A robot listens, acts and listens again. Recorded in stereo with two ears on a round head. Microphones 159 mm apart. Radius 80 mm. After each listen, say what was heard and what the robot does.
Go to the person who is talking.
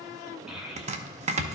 Turn 30° right.
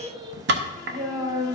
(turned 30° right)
So it is at 145° right. Turn 145° right.
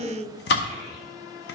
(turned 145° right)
The child speaking is now 25° left. Turn 25° left.
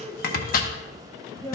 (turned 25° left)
The child speaking is now 15° left. Turn 15° left.
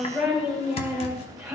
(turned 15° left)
Drive 1.0 m forward.
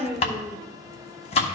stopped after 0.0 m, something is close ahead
Blocked. The child speaking is further on, straight ahead.